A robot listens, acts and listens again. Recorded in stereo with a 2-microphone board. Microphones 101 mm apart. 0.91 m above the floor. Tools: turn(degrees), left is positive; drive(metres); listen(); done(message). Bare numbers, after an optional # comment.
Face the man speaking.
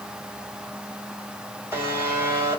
listen()
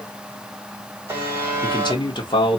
# The man speaking: about 50° left or 130° left.
turn(50)
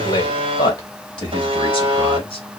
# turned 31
# The man speaking: about 50° left or 130° left.
turn(50)
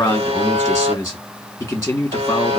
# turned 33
# So it is at 25° left.
turn(25)
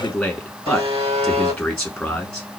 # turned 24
done("Found it: a man speaking, straight ahead, 1 to 2 m away.")